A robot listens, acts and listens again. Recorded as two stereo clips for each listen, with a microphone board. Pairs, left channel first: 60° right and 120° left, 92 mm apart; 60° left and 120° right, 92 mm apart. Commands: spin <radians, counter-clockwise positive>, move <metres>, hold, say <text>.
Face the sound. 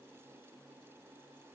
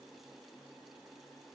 hold
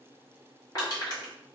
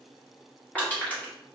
spin -0.26
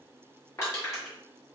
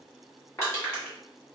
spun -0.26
say Found it: crushing, straight ahead, 1 to 2 m away.